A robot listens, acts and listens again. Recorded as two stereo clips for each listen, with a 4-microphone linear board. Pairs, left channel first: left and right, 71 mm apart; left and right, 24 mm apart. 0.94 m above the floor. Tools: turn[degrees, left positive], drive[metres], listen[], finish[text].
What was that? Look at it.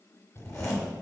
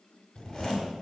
Thought: The zipper: about 40° left or 140° left.
Action: turn[40]
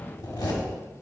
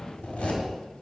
Thought: So it is at 100° left.
Action: turn[100]
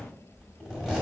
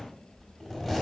Thought: The zipper is now 10° right.
Action: turn[-10]
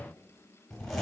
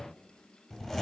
Action: finish[Found it: a zipper, straight ahead, 1 to 2 m away.]